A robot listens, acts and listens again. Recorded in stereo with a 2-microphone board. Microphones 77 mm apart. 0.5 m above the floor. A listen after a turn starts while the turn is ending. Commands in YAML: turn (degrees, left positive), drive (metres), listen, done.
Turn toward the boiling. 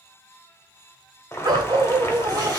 turn: 35
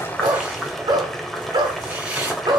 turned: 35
done: "Facing the boiling, 1 to 2 m away."